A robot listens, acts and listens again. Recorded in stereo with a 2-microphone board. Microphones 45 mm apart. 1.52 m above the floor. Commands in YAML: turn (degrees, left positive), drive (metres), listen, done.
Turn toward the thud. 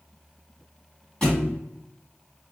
turn: 20
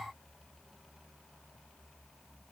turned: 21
listen: true
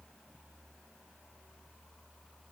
done: "I heard a thud, but can't make it out now. It was about 5° right or 140° left."